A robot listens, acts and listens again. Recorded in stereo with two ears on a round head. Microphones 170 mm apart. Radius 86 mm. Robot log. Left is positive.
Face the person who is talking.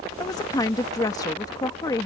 note: The woman speaking: about 20° left or 160° left.
cmd yaw +20
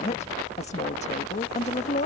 note: So it is at 135° left.
cmd yaw +135
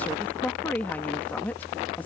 note: The woman speaking is now 10° left.
cmd yaw +10
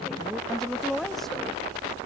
end: Found it: a woman speaking, straight ahead.